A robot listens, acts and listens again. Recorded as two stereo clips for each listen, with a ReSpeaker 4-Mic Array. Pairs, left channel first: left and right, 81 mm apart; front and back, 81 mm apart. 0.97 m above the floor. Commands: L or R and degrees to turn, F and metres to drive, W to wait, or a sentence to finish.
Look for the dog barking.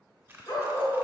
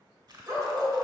L130
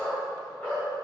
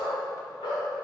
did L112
L15
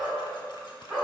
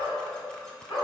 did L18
Found it: a dog barking, straight ahead, 2 to 4 m away.